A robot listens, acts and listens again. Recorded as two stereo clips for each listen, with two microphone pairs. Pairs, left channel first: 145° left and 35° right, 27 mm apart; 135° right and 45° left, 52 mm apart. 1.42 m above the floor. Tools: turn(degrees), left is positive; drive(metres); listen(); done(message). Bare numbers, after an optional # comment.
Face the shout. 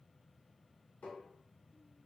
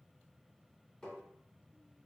listen()
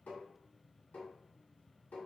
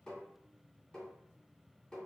listen()
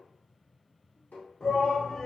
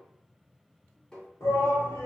# The shout: 155° right.
turn(-155)
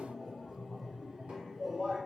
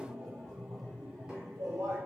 # The shout is now 30° left.
turn(30)
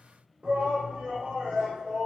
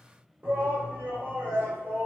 done("Facing the shout, 1 to 2 m away.")